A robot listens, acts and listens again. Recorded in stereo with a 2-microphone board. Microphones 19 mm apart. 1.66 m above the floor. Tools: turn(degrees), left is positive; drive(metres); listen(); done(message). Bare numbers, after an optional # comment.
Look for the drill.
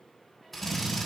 turn(30)
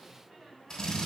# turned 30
# So it is at 140° left.
turn(140)
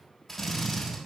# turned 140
# The drill is now 15° left.
turn(15)
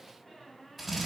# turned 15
done("Found it: a drill, straight ahead, over 4 m away.")